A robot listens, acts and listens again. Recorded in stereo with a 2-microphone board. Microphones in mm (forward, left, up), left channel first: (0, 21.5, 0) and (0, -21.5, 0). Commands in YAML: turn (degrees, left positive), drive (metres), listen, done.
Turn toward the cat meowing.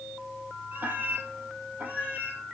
turn: -45
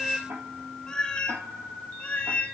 turn: 40
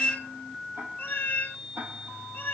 turn: 45
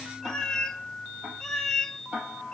turn: 10
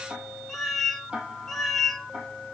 done: "Found it: a cat meowing, straight ahead."